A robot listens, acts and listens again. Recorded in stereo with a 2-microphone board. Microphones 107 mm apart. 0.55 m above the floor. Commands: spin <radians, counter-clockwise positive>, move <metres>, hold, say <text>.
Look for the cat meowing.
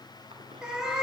spin -0.52
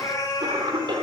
spin 0.70
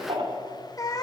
spin 0.70
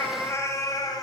spin 0.70
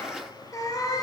spin 0.61
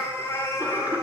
spin 0.44
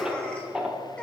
hold
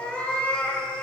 spin 0.17
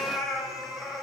say Found it: a cat meowing, straight ahead.